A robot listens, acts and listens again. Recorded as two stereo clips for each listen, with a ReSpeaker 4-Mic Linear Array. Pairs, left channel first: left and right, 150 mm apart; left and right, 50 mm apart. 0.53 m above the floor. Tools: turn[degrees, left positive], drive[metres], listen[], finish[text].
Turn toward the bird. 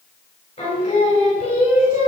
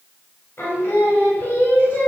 Action: listen[]
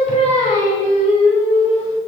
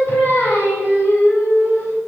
Action: listen[]
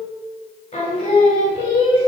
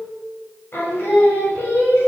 Action: finish[I can't make out a bird to turn to.]